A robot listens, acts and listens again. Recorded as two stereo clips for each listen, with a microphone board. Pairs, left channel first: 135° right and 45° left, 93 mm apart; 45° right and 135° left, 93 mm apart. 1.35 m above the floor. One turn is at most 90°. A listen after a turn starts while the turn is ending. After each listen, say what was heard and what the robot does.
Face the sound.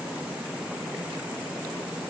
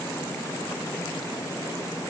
Keep listening.
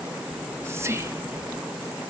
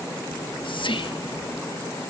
The whispering: 15° right. Turn 15° right.
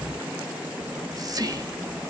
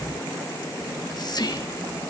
Found it: whispering, straight ahead.